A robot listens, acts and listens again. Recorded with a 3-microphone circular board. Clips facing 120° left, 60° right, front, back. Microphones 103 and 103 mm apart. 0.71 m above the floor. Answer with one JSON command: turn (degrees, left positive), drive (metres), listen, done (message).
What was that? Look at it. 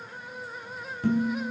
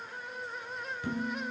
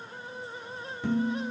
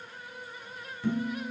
{"turn": 70}
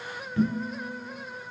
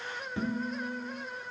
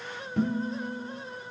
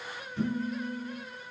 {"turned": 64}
{"done": "Found it: dishes clattering, straight ahead, 2 to 4 m away."}